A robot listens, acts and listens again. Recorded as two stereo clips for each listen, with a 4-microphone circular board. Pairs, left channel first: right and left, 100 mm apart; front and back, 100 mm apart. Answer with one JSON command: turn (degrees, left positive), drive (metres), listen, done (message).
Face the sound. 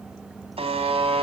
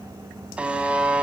{"turn": 100}
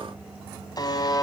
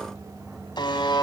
{"turn": -40}
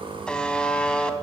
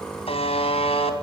{"turn": -10}
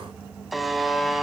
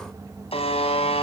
{"done": "Found it: a buzzer, straight ahead, 2 to 4 m away."}